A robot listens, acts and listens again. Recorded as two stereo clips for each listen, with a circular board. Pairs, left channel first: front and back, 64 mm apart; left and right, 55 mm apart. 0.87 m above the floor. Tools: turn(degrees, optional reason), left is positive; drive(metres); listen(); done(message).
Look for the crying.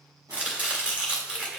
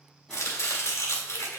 listen()
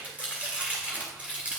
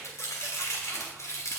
listen()
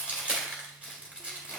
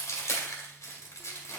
done("I can't make out crying, only chopping.")